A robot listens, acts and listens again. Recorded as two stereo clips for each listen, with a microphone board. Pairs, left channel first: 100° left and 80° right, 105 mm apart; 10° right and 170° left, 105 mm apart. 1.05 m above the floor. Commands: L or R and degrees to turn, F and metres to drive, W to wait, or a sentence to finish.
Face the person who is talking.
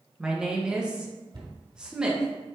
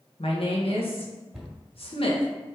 Facing the woman speaking, 1 to 2 m away.